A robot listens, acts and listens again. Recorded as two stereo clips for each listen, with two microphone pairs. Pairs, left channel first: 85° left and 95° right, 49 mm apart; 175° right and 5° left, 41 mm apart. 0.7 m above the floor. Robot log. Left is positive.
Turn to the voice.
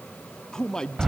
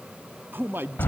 note: The man speaking: 10° left.
cmd yaw +10
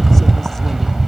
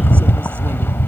cmd idle
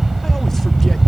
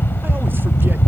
cmd idle
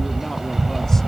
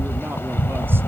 end: Facing where the man speaking came from. I can't hear it now.